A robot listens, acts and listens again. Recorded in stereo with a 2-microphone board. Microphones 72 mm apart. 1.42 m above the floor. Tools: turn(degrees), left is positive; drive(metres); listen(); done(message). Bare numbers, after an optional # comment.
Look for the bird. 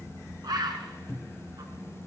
# The bird: about 65° right or 115° right.
turn(-65)
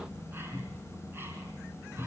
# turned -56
listen()
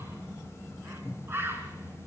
# So it is at 35° right.
turn(-35)
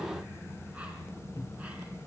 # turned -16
# Nothing new. It was at 20° right.
turn(-20)
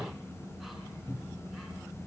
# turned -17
listen()
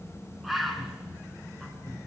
done("Found it: a bird, straight ahead, 2 to 4 m away.")